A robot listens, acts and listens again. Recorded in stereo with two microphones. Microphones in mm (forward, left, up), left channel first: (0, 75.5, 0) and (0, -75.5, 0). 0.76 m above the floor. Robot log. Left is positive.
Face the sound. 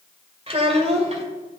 note: The child speaking: about 50° right or 130° right.
cmd yaw -50
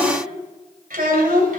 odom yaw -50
note: So it is at 65° right.
cmd yaw -65
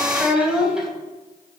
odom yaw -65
end: Found it: a child speaking, straight ahead.